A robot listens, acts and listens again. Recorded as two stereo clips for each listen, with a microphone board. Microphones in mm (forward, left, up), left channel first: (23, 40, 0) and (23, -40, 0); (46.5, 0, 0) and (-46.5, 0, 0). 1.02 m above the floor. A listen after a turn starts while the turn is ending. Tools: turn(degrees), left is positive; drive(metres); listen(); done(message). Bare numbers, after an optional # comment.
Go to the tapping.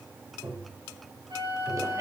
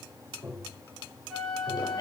# The tapping: 125° right.
turn(-125)
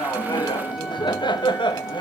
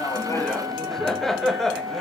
listen()
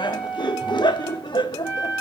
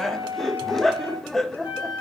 listen()
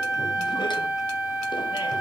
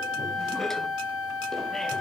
done("I heard tapping from this way, but can't make it out now. I did not reach it.")